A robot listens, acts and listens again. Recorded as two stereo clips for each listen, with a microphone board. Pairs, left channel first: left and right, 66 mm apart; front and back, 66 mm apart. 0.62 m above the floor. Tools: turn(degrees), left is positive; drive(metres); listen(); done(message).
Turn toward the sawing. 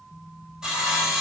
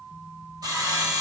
turn(degrees=-170)
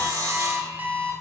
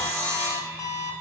turn(degrees=-60)
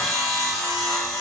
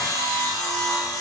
done("Facing the sawing, 1 to 2 m away.")